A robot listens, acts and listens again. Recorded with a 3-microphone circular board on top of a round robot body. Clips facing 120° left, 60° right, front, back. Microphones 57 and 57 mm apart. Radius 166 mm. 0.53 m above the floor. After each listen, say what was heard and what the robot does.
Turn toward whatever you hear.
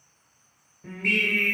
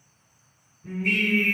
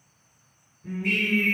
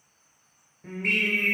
The singing: 145° left. Turn 145° left.
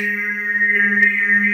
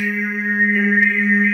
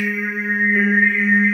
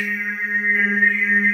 The singing is now 30° left. Turn 30° left.
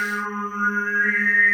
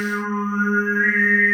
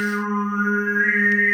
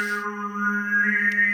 Facing the singing.